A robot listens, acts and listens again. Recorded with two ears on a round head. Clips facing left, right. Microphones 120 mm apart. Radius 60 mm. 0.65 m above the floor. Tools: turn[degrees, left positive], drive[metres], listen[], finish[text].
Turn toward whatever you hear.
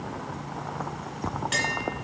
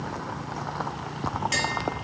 Action: turn[-30]
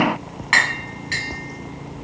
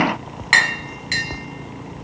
Thought: So it is at 135° right.
Action: turn[-135]
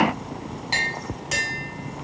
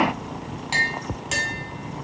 Thought: The tapping is now 10° right.
Action: turn[-10]
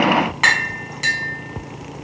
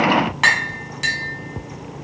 Action: finish[Found it: tapping, straight ahead.]